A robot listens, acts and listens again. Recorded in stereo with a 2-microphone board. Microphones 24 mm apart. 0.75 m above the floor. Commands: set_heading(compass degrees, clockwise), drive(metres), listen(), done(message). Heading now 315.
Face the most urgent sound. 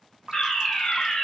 set_heading(285)
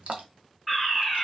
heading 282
done("Found it: a fire alarm, straight ahead.")